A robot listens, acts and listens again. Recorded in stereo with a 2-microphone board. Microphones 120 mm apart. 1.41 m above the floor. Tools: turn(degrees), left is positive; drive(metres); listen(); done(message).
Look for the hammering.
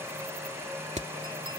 turn(degrees=-70)
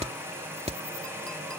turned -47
turn(degrees=-60)
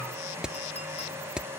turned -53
turn(degrees=-10)
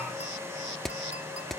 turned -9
done("Facing the hammering.")